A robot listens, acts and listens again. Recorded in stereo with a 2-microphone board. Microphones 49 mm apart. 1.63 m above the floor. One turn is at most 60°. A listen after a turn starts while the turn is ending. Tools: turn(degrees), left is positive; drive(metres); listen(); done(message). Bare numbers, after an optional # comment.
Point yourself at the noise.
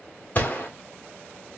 # The gunshot: about 35° left or 145° left.
turn(35)
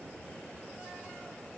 listen()
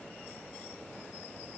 done("I heard a gunshot, but can't make it out now. It was about straight ahead or 110° left.")